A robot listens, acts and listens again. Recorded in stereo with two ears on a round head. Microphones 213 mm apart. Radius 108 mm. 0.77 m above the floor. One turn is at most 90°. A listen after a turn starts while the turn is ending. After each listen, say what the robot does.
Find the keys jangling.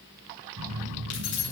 Turn 50° left.
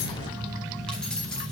Facing the keys jangling.